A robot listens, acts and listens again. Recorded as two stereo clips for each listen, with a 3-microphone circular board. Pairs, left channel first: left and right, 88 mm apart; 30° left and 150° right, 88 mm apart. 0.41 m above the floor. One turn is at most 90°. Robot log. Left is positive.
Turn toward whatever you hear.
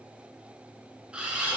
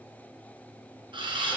note: The camera shutter: 165° right.
cmd yaw -90
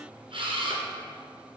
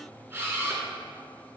note: The camera shutter is now 85° right.
cmd yaw -85
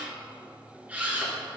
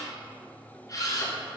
note: The camera shutter is now 15° right.
cmd yaw -15
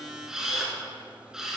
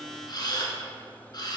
end: Found it: a camera shutter, straight ahead.